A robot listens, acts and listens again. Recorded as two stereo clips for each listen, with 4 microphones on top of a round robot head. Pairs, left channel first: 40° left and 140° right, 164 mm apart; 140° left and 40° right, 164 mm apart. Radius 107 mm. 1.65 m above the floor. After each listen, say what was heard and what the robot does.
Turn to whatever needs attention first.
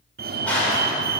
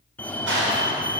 The fire alarm: 145° right. Turn 145° right.
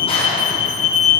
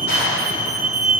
Facing the fire alarm.